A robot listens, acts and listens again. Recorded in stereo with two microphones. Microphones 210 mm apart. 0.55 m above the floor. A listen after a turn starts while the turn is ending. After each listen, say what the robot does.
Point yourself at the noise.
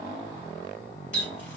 Turn 60° left.
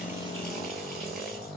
Keep listening.
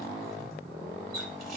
Facing the running tap.